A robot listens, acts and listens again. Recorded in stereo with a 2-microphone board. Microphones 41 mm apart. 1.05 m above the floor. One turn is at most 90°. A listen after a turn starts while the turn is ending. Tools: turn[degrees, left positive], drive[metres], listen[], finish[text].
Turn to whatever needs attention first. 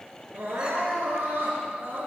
Thought: The crying: about 60° right or 120° right.
Action: turn[-60]
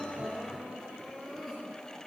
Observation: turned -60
Action: finish[Found it: crying, straight ahead, over 4 m away.]